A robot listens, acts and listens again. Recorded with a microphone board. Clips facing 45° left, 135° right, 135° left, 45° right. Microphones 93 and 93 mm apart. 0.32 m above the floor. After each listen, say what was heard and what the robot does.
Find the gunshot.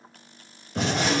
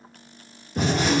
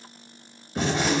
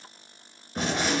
The gunshot: 40° left. Turn 40° left.
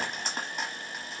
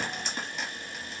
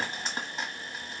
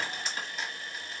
Facing where the gunshot came from. I can't hear it now.